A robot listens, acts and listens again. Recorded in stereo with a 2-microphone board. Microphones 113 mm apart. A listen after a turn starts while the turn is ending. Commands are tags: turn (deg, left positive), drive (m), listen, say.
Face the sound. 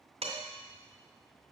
<turn deg="-65"/>
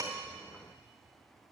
<listen/>
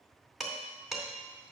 <say>Facing the dishes clattering, 2 to 4 m away.</say>